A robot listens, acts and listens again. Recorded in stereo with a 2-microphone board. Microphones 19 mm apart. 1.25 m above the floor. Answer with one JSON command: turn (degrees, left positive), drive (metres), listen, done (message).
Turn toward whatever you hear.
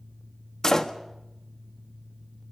{"turn": 30}
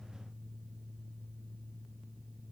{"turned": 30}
{"listen": true}
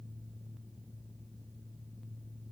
{"done": "I heard a door slam, but can't make it out now. It was about straight ahead or 120° left."}